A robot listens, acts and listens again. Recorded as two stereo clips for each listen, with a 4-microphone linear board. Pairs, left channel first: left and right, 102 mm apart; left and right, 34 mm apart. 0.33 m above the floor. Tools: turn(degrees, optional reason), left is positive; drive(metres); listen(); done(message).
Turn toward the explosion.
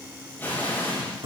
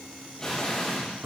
turn(degrees=20, reason="The explosion: about 20° left or 160° left.")
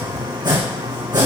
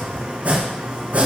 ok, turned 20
listen()
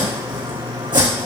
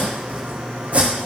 done("I heard an explosion, but can't make it out now. It was about straight ahead or 140° left.")